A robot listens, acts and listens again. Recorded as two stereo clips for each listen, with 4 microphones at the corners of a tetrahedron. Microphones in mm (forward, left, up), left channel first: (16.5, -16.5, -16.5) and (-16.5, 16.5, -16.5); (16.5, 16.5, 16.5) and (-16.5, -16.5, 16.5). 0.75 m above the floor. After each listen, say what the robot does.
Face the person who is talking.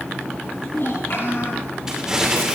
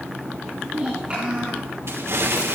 Turn 70° right.
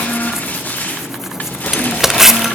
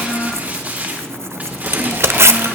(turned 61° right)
Turn 10° right.
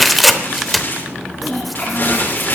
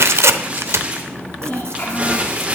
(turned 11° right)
Facing the child speaking, over 4 m away.